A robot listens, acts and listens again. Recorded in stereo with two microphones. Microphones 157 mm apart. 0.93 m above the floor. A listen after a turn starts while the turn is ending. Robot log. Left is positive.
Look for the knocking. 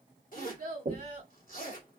note: The knocking: about 55° right or 125° right.
cmd yaw -55
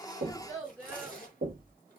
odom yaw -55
note: So it is at 70° right.
cmd yaw -70
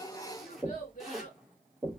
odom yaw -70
end: Facing the knocking, 1 to 2 m away.